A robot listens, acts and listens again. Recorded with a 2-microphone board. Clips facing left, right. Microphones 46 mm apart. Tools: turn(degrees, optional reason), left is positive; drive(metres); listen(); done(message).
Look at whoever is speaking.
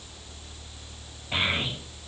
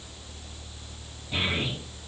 turn(degrees=70, reason="The child speaking: about 70° left or 110° left.")
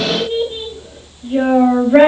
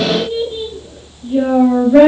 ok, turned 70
turn(degrees=40, reason="So it is at 40° left.")
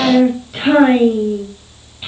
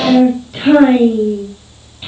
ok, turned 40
turn(degrees=10, reason="The child speaking is now 10° left.")
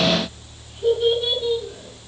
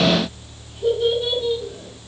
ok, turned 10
done("Facing the child speaking, 2 to 4 m away.")